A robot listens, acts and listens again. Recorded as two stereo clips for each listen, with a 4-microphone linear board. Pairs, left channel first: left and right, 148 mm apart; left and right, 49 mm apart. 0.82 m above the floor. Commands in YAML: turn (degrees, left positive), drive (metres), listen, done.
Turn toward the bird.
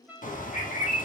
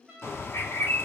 turn: 60
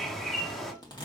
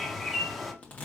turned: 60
done: "Facing the bird."